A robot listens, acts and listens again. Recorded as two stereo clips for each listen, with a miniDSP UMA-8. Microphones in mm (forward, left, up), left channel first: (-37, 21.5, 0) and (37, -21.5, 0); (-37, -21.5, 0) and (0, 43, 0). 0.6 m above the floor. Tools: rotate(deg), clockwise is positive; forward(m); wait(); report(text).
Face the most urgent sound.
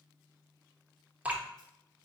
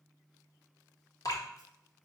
wait()
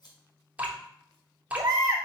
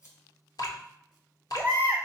report("Facing the baby crying, 1 to 2 m away.")